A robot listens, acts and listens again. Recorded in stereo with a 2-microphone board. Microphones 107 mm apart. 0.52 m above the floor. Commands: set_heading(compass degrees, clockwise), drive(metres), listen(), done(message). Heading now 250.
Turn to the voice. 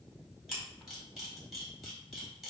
listen()
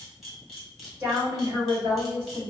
set_heading(275)
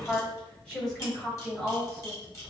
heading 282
set_heading(267)
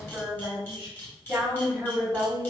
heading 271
done("Facing the woman speaking, over 4 m away.")